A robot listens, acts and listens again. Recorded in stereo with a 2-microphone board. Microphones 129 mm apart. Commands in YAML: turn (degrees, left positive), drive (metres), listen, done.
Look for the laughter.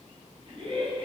turn: -40
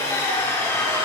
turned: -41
listen: true
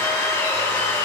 listen: true
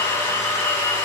done: "I heard laughter, but can't make it out now. It was about straight ahead or 95° right."